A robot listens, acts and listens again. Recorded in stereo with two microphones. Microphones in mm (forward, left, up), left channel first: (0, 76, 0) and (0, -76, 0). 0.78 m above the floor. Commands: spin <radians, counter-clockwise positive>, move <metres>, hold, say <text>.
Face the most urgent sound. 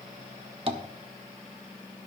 hold
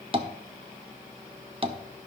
hold
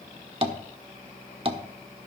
say I can't make out anything urgent to turn to.